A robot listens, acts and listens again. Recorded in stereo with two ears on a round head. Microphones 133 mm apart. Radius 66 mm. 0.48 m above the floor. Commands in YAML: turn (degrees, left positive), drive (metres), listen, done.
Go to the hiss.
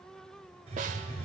turn: -45
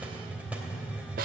turn: -10
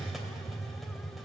drive: 1.0
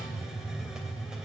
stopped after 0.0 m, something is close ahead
done: "Something is in my way. I am facing the hiss but have not reached it."